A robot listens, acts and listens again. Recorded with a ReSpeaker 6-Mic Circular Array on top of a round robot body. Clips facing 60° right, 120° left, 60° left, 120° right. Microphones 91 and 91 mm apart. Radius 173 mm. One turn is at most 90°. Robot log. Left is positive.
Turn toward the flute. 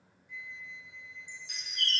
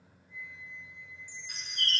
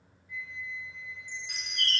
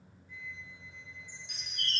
note: The flute: 60° right.
cmd yaw -60
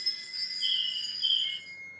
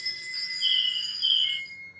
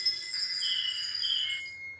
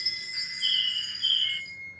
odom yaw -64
end: Found it: a flute, straight ahead.